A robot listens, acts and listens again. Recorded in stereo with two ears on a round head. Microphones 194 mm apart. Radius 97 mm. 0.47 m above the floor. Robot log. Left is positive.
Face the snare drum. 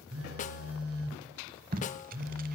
note: The snare drum: about 35° left or 145° left.
cmd yaw +35
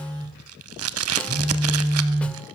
cmd idle
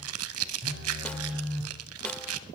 cmd idle
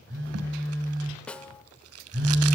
end: Found it: a snare drum, straight ahead, under 1 m away.